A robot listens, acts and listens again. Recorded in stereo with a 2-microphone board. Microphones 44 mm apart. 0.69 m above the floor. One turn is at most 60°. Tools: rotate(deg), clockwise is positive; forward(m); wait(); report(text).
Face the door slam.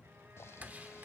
rotate(35)
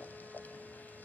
wait()
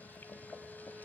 report("I heard a door slam, but can't make it out now. It was about straight ahead or 110° right.")